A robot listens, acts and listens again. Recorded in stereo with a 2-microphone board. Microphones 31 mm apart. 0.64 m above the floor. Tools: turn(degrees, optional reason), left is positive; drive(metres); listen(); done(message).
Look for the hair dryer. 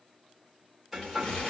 turn(degrees=30)
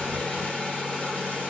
turn(degrees=150, reason="So it is at 150° left.")
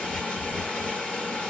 turn(degrees=60, reason="The hair dryer is now 60° left.")
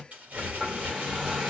turn(degrees=-15, reason="The hair dryer is now 15° right.")
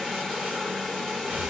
done("Found it: a hair dryer, straight ahead.")